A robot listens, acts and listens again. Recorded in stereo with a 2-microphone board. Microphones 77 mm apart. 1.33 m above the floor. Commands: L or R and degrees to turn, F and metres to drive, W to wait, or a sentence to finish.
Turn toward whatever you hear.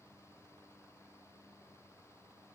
W
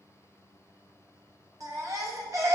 R40
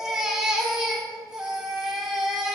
Facing the baby crying, 1 to 2 m away.